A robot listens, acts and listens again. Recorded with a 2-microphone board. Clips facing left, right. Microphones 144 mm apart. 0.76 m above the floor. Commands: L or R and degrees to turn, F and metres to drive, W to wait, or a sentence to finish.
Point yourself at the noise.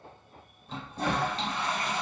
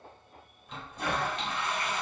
L35
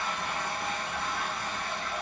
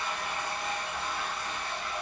L105
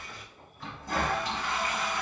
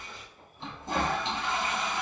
R30
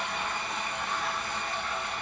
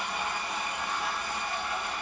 R10
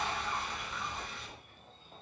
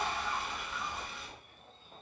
Found it: a toilet flushing, straight ahead.